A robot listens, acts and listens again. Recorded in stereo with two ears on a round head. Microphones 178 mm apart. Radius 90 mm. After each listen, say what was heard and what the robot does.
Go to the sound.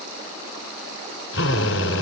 Turn 90° left.
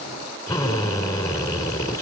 So it is at 15° left. Turn 15° left.
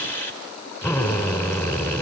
The drill is now 10° left. Turn 10° left.
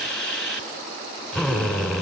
Drive 1.0 m forward.
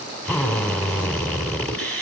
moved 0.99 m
Drive 1.0 m forward.
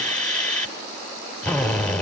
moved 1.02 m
Drive 1.0 m forward.
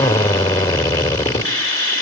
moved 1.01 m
The drill is now 20° left. Turn 20° left.
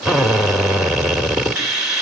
Drive 1.0 m forward.
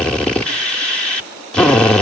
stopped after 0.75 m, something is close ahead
I am next to the drill.